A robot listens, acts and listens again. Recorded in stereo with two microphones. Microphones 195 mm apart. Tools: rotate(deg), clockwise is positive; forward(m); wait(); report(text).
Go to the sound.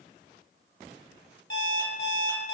rotate(-70)
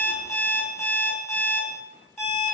rotate(-10)
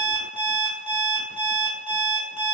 forward(1.0)
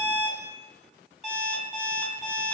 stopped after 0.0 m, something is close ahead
report("Something is in my way. I am facing the alarm clock but have not reached it.")